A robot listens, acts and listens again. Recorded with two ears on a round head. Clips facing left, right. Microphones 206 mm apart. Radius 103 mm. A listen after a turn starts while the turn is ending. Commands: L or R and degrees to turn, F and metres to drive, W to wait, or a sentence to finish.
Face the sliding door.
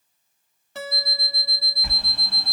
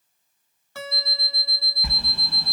R90
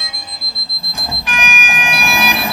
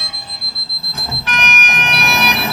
L10
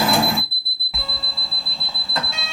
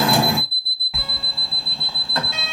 Found it: a sliding door, straight ahead.